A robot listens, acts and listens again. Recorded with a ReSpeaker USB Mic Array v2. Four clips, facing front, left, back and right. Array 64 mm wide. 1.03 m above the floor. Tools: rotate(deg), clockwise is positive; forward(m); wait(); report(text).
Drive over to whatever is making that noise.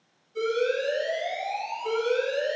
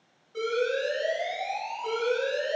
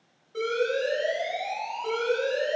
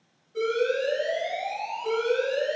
rotate(-155)
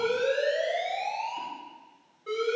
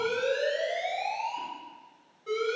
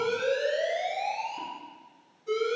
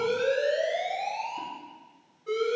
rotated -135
rotate(-25)
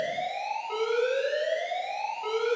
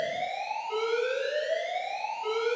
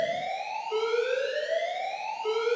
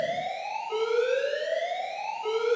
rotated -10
rotate(-15)
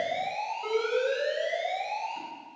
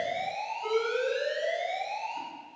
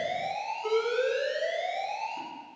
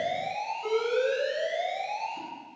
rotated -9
forward(1.0)
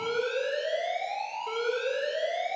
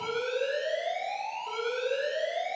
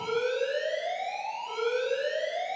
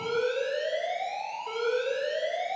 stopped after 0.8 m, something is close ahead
report("I am next to the alarm.")